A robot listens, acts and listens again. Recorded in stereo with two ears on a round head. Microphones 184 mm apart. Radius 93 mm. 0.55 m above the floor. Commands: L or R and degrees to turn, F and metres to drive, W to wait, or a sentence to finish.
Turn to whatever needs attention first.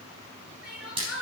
R30
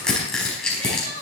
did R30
R145
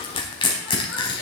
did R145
W
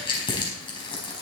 W
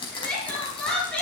Facing the crying.